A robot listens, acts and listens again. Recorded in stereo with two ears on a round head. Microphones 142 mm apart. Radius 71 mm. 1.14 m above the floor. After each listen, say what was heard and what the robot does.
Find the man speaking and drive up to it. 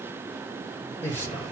Turn 30° left.
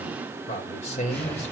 So it is at 135° left. Turn 135° left.
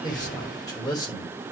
The man speaking is now 25° left. Turn 25° left.
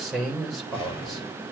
Drive 1.0 m forward.
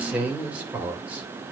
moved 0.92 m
The man speaking is now 10° right. Turn 10° right.
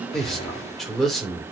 Drive 1.0 m forward.
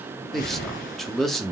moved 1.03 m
Drive 1.0 m forward.
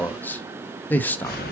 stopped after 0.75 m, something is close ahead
The man speaking is now 10° left. Turn 10° left.
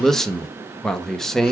Arrived at the man speaking, straight ahead.